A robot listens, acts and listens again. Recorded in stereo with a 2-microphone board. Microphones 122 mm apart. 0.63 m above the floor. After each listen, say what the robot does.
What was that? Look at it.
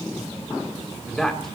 Turn 30° left.
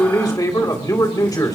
Turn 140° left.
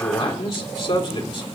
Turn 60° left.
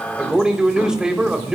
Turn 10° right.
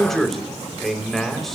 Facing the man speaking.